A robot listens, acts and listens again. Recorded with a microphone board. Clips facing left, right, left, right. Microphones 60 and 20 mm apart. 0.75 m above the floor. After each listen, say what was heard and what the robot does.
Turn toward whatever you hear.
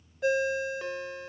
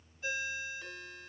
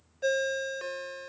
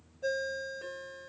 Turn 90° left.
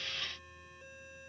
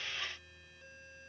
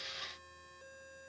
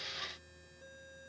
Keep listening.
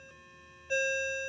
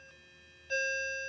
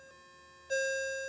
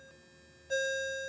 The ringtone is now 15° left. Turn 15° left.
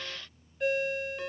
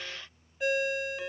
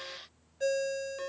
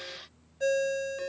Facing the ringtone, 1 to 2 m away.